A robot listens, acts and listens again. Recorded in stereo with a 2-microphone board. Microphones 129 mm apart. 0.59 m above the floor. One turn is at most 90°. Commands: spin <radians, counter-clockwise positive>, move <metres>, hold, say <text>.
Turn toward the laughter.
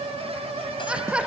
spin -0.52
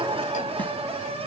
spin -1.57
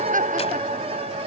spin -1.31
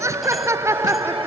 spin -0.35
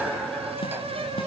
hold
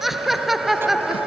say Facing the laughter.